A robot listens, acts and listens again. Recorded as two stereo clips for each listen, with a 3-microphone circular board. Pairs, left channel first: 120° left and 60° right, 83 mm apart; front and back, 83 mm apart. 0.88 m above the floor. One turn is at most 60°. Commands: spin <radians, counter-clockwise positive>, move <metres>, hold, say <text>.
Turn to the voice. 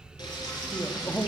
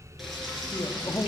spin 0.87
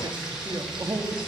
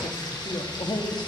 spin -0.26
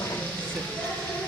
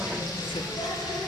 hold
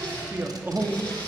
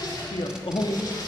say Found it: a man speaking, straight ahead, 1 to 2 m away.